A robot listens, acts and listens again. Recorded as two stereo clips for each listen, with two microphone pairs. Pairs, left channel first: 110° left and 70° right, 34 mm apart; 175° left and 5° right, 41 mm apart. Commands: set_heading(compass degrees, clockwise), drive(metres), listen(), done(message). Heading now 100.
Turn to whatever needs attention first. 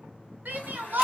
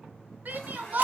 set_heading(150)
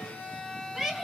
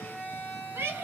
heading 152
done("Found it: a shout, straight ahead, under 1 m away.")